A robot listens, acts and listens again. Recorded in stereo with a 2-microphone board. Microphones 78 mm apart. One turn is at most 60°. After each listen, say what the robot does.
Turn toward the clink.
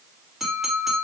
Turn 30° right.
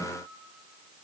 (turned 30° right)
Keep listening.
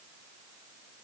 Keep listening.
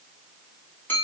Turn 25° left.
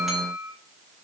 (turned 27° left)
Facing the clink.